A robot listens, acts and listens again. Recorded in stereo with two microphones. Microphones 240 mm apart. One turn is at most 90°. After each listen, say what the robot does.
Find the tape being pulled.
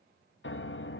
Keep listening.
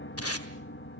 Turn 90° left.
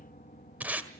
Facing the tape being pulled, 1 to 2 m away.